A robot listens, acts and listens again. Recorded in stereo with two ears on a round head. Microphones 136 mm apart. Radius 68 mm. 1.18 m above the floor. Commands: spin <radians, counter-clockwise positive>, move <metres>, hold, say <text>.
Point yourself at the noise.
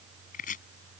spin 0.87
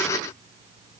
hold
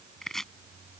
say Facing the chopping.